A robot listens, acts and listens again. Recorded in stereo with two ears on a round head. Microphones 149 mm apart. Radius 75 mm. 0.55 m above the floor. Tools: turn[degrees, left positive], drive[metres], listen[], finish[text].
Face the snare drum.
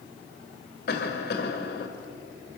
Action: listen[]
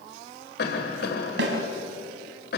Thought: The snare drum: about 75° right or 105° right.
Action: turn[-75]
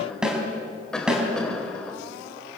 Action: finish[Facing the snare drum.]